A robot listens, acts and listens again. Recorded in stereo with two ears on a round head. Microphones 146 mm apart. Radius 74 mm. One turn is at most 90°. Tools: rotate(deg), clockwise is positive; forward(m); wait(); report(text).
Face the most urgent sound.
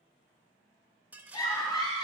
rotate(-25)
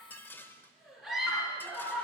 report("Facing the scream.")